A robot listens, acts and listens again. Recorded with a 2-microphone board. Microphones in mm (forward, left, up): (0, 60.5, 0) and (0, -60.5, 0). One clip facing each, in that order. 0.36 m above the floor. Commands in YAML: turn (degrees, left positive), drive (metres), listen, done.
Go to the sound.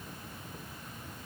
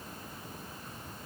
listen: true
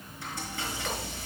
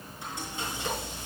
turn: -20
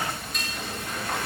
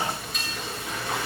drive: 1.0
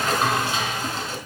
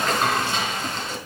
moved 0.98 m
drive: 1.0
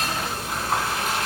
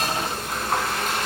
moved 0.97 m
drive: 1.0
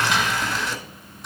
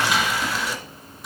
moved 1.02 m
drive: 1.0
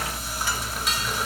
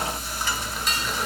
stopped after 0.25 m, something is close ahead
done: "I am next to the frying."